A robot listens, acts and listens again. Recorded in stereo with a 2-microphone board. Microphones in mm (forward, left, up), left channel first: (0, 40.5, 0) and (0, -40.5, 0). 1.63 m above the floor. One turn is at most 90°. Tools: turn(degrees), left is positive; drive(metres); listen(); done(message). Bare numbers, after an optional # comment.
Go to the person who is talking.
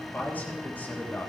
# The man speaking: about 20° left or 160° left.
turn(20)
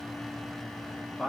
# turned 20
drive(1.0)
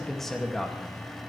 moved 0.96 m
drive(1.0)
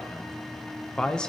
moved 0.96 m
# The man speaking is now 10° left.
turn(10)
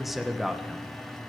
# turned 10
drive(1.0)
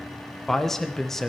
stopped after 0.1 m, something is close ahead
done("Arrived at the man speaking, straight ahead.")